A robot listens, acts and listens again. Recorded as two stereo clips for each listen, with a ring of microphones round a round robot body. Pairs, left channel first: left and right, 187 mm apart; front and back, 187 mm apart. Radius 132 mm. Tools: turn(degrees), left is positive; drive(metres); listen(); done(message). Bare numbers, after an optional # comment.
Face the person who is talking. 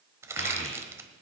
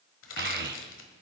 # The child speaking: 155° left.
turn(155)
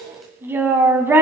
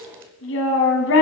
# The child speaking is now 10° right.
turn(-10)
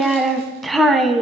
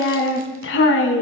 done("Facing the child speaking.")